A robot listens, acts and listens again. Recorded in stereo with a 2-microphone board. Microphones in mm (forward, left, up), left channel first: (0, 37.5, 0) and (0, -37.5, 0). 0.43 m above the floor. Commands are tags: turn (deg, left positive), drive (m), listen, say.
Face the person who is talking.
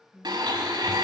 <turn deg="-30"/>
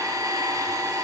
<listen/>
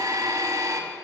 <listen/>
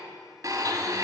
<say>I heard a woman speaking, but can't make it out now. It was about 20° left or 140° right.</say>